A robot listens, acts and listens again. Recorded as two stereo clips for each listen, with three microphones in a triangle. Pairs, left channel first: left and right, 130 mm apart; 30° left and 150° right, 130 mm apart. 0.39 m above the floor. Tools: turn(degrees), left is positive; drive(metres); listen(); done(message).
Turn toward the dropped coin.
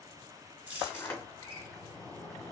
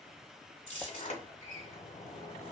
turn(degrees=-15)
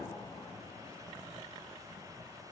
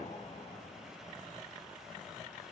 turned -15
done("I heard a dropped coin from this way, but can't make it out now.")